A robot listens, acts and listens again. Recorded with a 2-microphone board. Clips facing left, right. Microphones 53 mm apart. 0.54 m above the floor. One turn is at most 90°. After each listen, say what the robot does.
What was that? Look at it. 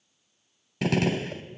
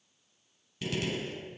Turn 75° left.
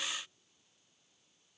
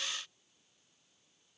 Keep listening.
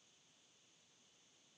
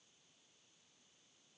I heard a gunshot, but can't make it out now. It was about straight ahead or 30° left.